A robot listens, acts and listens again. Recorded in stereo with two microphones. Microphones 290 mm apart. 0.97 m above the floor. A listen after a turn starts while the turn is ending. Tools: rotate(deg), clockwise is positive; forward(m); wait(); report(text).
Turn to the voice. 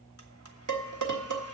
wait()
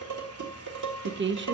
rotate(40)
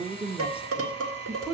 report("Facing the woman speaking, under 1 m away.")